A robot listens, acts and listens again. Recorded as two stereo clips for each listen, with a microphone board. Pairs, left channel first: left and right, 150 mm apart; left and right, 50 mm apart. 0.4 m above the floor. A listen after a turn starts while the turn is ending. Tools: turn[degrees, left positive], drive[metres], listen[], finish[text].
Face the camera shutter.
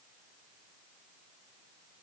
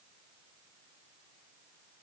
Action: listen[]
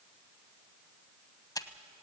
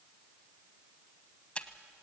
Thought: The camera shutter: about 25° left or 155° left.
Action: turn[25]
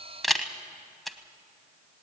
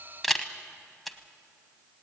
Action: finish[Found it: a camera shutter, straight ahead, 1 to 2 m away.]